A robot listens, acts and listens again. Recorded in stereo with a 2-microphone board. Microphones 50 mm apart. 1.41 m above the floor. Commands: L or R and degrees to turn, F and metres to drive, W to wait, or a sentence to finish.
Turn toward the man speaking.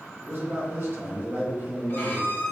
R45
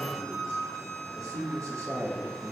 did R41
R95
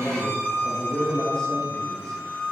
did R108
L15
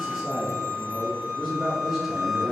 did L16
Facing the man speaking, 1 to 2 m away.